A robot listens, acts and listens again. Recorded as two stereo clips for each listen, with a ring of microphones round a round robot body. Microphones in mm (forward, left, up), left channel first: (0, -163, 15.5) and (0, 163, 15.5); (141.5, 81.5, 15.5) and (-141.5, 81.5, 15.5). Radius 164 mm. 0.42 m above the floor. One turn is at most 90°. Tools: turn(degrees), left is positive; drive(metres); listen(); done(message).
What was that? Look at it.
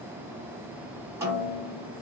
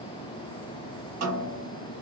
turn(degrees=90)
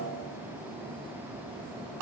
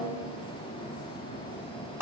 turn(degrees=90)
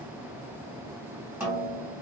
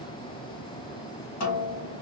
turn(degrees=10)
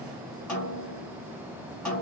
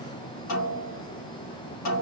done("Facing the snare drum, 2 to 4 m away.")